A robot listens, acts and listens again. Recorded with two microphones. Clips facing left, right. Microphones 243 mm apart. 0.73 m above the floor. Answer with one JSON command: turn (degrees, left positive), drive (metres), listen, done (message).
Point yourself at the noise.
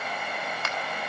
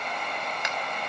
{"turn": -15}
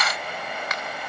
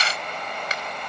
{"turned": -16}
{"turn": -150}
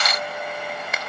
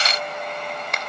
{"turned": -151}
{"done": "Facing the finger snap, 2 to 4 m away."}